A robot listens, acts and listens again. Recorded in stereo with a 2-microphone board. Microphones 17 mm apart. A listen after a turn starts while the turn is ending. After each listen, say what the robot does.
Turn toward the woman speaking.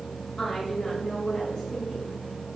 Turn 60° left.
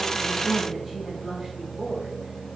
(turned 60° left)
Found it: a woman speaking, straight ahead, over 4 m away.